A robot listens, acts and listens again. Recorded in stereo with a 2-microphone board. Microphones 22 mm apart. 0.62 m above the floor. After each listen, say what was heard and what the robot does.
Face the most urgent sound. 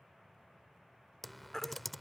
The baby crying: about 20° left or 160° left. Turn 20° left.
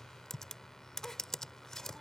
Keep listening.
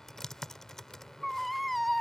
Found it: a baby crying, straight ahead.